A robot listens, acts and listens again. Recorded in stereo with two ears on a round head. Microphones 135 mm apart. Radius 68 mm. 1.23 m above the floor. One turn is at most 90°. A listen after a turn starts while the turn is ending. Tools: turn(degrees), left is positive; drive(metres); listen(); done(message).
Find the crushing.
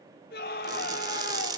turn(degrees=-30)
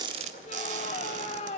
listen()
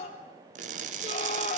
turn(degrees=-90)
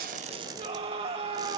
turn(degrees=-30)
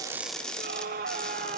done("Facing the crushing.")